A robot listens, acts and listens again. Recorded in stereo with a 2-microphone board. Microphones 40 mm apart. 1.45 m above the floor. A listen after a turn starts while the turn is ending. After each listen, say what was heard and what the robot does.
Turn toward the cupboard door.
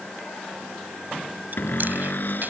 The cupboard door: about 55° left or 125° left. Turn 55° left.
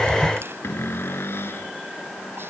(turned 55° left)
So it is at 75° left. Turn 75° left.
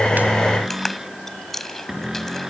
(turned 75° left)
The cupboard door is now 15° right. Turn 15° right.
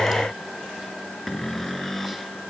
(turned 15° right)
Found it: a cupboard door, straight ahead.